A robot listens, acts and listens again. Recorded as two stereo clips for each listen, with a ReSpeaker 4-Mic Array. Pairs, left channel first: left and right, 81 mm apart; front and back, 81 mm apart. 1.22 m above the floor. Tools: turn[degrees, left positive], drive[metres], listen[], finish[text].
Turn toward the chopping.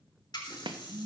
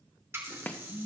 Thought: The chopping: 70° right.
Action: turn[-70]
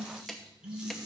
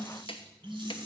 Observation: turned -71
Action: finish[Facing the chopping, 1 to 2 m away.]